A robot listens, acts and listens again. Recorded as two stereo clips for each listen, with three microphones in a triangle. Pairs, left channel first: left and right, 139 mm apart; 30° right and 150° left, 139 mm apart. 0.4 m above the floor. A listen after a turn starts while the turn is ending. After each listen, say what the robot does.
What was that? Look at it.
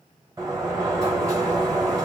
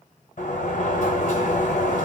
Turn 25° right.
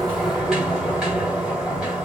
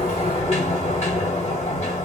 Found it: a sliding door, straight ahead.